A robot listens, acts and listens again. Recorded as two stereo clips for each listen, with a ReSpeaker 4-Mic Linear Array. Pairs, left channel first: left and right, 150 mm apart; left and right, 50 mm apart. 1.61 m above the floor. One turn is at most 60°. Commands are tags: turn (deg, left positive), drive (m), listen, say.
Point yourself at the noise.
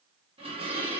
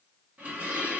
<turn deg="-40"/>
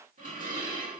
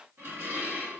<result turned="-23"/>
<turn deg="-60"/>
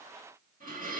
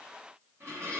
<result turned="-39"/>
<turn deg="-60"/>
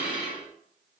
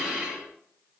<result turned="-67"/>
<say>Found it: dishes clattering, straight ahead.</say>